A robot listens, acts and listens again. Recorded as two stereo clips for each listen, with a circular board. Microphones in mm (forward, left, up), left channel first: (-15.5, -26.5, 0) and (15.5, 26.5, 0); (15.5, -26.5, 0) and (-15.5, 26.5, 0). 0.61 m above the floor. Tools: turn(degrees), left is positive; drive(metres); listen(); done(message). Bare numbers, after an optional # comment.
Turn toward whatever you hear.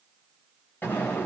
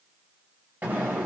# The explosion: 175° right.
turn(-175)
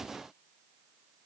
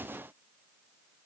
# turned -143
# Nothing new. It was at 35° right.
turn(-35)
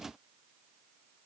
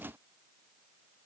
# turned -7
# Nothing new. It was at 25° right.
turn(-25)
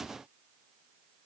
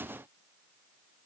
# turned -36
# Nothing new. It was at 10° left.
turn(10)
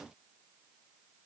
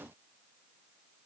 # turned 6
done("I heard an explosion from this way, but can't make it out now.")